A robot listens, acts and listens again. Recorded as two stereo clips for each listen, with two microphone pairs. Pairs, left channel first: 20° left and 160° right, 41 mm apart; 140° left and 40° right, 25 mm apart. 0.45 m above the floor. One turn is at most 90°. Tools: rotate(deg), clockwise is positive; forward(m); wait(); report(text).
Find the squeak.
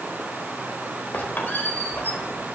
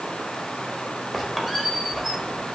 rotate(-55)
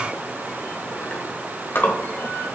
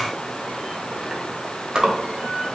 rotate(-15)
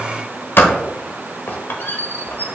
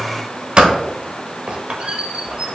report("Facing the squeak, 1 to 2 m away.")